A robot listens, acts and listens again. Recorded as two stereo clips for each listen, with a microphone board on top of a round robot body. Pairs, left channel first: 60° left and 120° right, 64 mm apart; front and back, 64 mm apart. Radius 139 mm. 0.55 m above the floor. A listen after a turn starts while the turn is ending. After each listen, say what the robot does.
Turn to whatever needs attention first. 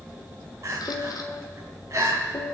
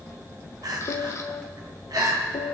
Turn 160° right.
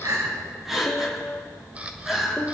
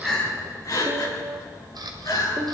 Turn 35° right.
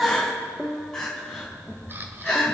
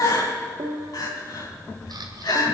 Turn 20° right.
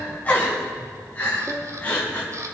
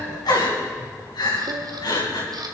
Found it: crying, straight ahead.